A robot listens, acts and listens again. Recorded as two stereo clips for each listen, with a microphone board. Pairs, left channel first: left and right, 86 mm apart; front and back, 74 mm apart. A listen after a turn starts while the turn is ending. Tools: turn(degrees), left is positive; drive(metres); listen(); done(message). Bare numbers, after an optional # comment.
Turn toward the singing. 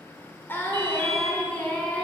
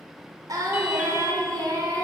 # The singing: 165° left.
turn(165)
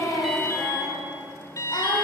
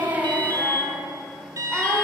# The singing is now 75° left.
turn(75)
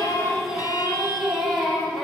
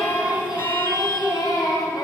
done("Found it: singing, straight ahead.")